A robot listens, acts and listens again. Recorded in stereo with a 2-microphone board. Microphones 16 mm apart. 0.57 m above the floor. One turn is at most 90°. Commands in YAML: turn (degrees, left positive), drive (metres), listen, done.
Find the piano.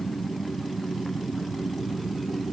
listen: true
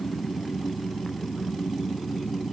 listen: true
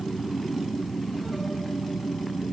done: "I can't make out a piano to turn to."